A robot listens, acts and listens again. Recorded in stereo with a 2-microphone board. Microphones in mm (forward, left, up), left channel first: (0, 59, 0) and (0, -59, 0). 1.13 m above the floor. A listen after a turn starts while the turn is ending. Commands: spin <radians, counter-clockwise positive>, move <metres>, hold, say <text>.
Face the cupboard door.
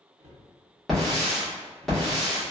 spin -1.22
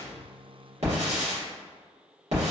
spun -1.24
hold
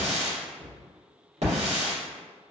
say Found it: a cupboard door, straight ahead, under 1 m away.